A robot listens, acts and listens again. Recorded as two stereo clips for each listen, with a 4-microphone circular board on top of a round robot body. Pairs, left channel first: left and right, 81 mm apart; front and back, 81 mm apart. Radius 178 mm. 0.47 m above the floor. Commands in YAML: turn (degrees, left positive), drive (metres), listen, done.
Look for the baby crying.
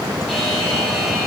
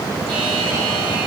listen: true
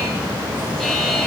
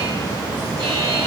listen: true
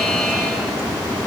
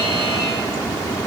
done: "I can't make out a baby crying to turn to."